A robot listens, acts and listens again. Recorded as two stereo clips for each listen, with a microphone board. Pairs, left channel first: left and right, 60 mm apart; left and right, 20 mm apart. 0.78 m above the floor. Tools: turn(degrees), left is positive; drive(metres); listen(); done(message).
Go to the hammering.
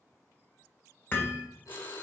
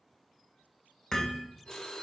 turn(degrees=35)
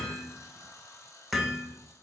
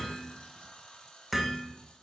drive(metres=1.0)
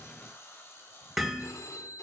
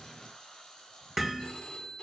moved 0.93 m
drive(metres=1.0)
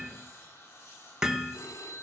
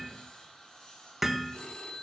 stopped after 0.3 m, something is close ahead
turn(degrees=-10)
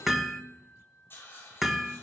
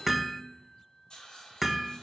done("Arrived at the hammering, straight ahead.")